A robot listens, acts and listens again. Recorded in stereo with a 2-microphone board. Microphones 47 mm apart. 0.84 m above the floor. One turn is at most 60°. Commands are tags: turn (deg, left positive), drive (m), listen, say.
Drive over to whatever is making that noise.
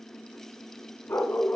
<turn deg="55"/>
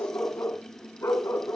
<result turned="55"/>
<turn deg="60"/>
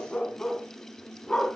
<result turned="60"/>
<turn deg="15"/>
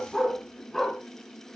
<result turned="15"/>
<drive m="1.0"/>
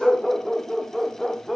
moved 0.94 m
<drive m="1.0"/>
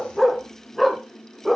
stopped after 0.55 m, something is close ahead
<say>I am next to the dog barking.</say>